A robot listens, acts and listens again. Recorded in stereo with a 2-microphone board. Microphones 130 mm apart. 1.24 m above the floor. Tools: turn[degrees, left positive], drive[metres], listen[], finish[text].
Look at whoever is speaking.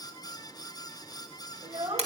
Thought: The child speaking: about 65° right or 115° right.
Action: turn[-65]
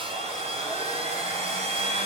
Action: listen[]
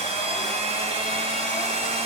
Action: listen[]
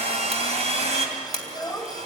Action: finish[Facing the child speaking, 2 to 4 m away.]